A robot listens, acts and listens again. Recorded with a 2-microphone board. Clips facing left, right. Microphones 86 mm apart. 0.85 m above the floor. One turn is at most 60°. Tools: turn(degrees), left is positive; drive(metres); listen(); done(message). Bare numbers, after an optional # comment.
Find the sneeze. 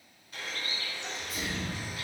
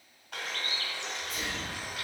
turn(30)
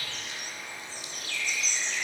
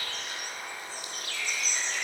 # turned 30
listen()
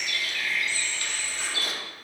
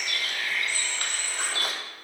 done("I heard a sneeze, but can't make it out now. It was about 30° right or 150° left.")